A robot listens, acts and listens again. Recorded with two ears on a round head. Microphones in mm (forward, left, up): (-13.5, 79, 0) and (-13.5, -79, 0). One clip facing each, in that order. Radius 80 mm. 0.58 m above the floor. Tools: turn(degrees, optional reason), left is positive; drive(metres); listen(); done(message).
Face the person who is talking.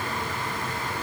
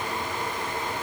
listen()
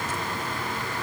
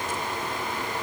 listen()
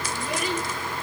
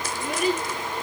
turn(degrees=-45, reason="The child speaking: about 45° right or 135° right.")
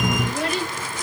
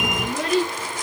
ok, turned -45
turn(degrees=-95, reason="So it is at 95° right.")
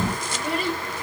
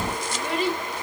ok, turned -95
turn(degrees=10, reason="The child speaking is now 10° left.")
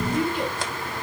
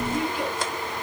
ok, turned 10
done("Found it: a child speaking, straight ahead, over 4 m away.")